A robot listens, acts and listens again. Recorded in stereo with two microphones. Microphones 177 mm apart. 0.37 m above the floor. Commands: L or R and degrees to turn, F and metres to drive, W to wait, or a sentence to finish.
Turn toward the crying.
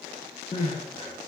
L40
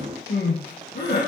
L100
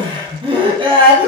R30
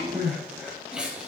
Facing the crying.